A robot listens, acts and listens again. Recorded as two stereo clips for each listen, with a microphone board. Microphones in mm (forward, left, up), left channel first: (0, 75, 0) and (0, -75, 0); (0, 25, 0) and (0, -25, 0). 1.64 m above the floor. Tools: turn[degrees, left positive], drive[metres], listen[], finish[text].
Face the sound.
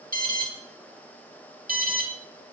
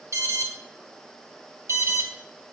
Thought: The alarm: about 70° right or 110° right.
Action: turn[-70]
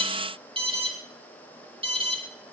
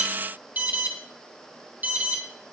Thought: So it is at 35° right.
Action: turn[-35]
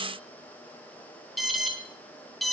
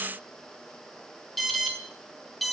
Action: finish[Facing the alarm, 2 to 4 m away.]